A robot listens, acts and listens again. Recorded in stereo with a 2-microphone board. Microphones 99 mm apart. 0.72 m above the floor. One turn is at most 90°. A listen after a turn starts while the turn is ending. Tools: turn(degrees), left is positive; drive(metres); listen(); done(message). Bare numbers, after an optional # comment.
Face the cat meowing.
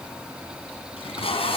listen()
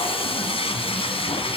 listen()
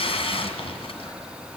done("I can't make out a cat meowing, only tape being pulled.")